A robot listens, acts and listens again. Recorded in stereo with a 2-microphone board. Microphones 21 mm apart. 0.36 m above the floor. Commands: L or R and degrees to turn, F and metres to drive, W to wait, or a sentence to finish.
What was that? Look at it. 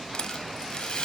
L45
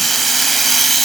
Found it: a rattle, straight ahead, under 1 m away.